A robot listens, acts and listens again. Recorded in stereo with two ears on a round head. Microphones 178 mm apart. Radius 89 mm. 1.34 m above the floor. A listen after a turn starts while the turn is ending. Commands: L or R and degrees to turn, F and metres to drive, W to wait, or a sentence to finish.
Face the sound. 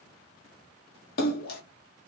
L50
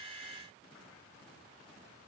W
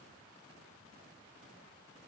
I heard a splash, but can't make it out now. It was about straight ahead or 80° left.